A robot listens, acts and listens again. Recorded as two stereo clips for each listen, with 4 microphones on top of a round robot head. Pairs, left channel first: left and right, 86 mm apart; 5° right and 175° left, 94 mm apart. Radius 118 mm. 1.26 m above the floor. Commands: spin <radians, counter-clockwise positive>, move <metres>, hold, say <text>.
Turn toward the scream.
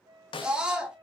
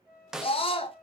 spin -0.17
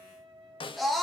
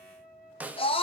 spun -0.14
say Found it: a scream, straight ahead, under 1 m away.